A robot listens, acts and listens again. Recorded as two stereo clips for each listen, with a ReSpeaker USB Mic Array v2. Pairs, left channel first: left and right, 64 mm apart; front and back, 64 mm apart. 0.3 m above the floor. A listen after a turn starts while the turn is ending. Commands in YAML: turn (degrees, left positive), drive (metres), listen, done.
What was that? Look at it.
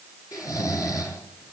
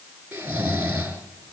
turn: 120
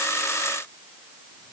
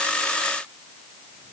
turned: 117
listen: true
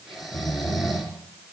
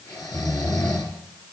done: "Found it: snoring, straight ahead."